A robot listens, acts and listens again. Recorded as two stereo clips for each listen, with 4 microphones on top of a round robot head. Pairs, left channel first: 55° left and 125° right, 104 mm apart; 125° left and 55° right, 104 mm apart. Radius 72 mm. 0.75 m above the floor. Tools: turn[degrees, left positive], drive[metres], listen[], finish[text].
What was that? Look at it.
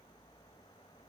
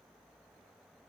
Action: listen[]
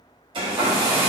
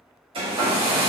Thought: The hair dryer: 85° right.
Action: turn[-85]
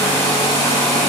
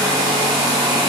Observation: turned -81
Action: finish[Facing the hair dryer.]